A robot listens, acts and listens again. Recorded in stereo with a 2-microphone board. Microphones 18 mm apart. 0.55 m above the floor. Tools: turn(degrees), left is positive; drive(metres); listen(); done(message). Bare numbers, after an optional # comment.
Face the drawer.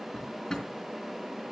# The drawer: about 20° left or 160° left.
turn(20)
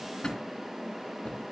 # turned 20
# So it is at 140° left.
turn(140)
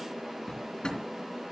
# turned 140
# The drawer is now 60° left.
turn(60)
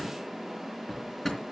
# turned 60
# The drawer is now 20° left.
turn(20)
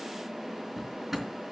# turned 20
done("Facing the drawer.")